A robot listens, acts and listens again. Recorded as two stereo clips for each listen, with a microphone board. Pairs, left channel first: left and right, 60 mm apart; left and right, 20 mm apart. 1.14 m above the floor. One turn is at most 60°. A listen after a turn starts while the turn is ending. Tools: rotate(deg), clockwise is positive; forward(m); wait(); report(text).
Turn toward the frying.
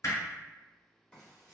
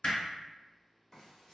rotate(-30)
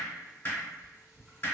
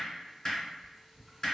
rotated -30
rotate(15)
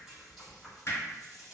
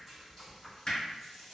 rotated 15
report("Found it: frying, straight ahead.")